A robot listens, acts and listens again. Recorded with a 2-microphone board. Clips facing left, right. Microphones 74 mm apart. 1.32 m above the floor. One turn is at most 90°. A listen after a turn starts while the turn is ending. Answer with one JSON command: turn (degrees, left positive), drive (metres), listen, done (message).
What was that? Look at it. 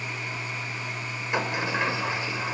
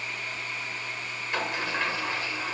{"turn": 20}
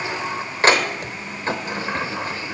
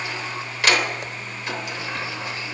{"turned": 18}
{"turn": 90}
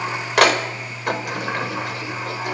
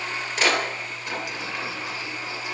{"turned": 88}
{"turn": 55}
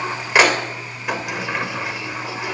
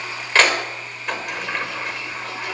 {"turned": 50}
{"done": "Facing the sliding door, 2 to 4 m away."}